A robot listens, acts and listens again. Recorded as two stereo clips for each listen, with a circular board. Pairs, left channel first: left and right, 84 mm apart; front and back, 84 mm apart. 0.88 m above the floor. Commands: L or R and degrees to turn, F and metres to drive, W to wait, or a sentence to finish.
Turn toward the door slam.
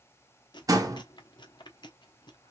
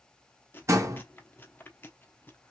R130
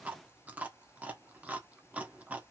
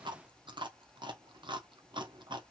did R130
I heard a door slam from this way, but can't make it out now.